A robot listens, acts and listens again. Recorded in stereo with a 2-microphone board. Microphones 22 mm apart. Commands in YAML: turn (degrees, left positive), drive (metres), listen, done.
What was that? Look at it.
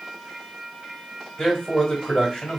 turn: 25
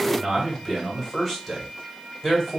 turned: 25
done: "Found it: a man speaking, straight ahead."